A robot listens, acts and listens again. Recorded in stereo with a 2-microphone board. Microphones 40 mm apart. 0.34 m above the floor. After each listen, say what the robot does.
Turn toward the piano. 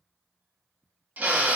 Keep listening.
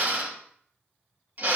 Keep listening.
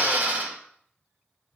I can't make out a piano to turn to.